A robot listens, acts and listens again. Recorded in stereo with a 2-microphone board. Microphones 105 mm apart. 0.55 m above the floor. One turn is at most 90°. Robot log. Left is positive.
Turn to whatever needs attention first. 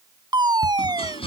note: The fire alarm: about 40° right or 140° right.
cmd yaw -40
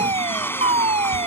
note: So it is at 100° right.
cmd yaw -90
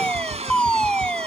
note: The fire alarm is now 10° left.
cmd yaw +10
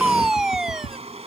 end: Facing the fire alarm.